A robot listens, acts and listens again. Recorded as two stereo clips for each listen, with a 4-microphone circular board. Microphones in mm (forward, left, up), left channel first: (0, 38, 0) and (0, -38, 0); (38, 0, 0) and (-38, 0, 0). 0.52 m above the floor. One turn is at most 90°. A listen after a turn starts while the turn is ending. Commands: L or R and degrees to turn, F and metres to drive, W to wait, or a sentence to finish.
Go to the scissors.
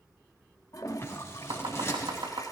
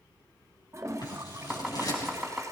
L35
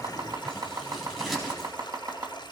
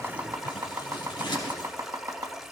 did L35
F1.0
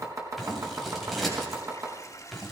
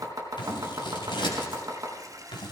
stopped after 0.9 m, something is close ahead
Blocked. The scissors is further on, straight ahead.